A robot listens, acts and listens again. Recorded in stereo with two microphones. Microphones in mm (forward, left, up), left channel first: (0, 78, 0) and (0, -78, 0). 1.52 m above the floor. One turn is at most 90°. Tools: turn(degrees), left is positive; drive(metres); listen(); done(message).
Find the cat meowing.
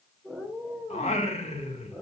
turn(degrees=30)
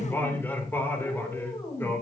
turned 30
turn(degrees=90)
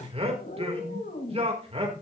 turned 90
turn(degrees=75)
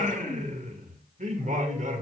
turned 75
listen()
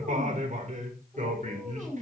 turn(degrees=-10)
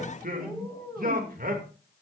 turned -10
done("Facing the cat meowing, over 4 m away.")